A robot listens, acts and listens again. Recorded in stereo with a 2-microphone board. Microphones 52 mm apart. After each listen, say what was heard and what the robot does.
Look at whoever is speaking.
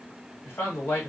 The man speaking: about 50° left or 130° left. Turn 50° left.
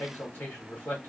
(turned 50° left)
So it is at 60° left. Turn 60° left.
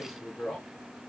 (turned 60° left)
The man speaking is now 15° left. Turn 15° left.
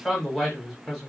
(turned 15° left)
Facing the man speaking.